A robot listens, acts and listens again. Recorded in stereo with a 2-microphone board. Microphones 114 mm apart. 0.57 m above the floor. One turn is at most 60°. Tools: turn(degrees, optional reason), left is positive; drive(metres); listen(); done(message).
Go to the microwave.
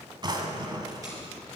listen()
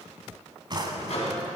turn(degrees=60, reason="The microwave: about 65° left or 115° left.")
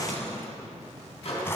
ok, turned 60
turn(degrees=60, reason="So it is at 60° left.")
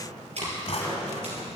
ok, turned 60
listen()
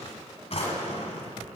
listen()
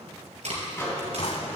turn(degrees=20, reason="The microwave is now 20° left.")
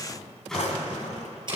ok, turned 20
drive(metres=1.0)
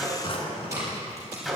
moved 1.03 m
drive(metres=1.0)
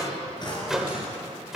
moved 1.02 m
drive(metres=1.0)
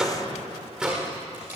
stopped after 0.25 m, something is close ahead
done("Arrived at the microwave, straight ahead.")